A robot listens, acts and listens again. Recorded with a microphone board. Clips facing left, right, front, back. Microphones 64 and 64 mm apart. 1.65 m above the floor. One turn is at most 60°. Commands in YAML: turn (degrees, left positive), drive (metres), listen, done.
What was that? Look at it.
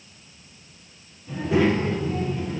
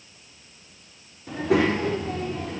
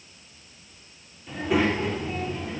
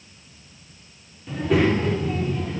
turn: -60
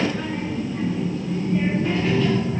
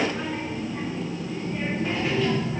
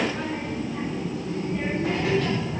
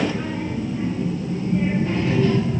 done: "Found it: a child speaking, straight ahead, over 4 m away."